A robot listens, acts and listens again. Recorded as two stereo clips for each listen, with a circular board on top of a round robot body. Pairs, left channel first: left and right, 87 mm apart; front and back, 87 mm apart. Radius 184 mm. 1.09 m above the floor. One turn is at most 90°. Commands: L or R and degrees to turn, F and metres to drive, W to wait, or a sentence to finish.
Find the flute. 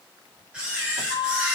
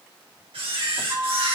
L90
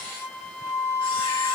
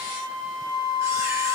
L30
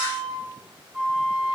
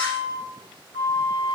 R10
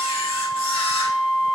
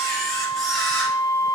Found it: a flute, straight ahead, 2 to 4 m away.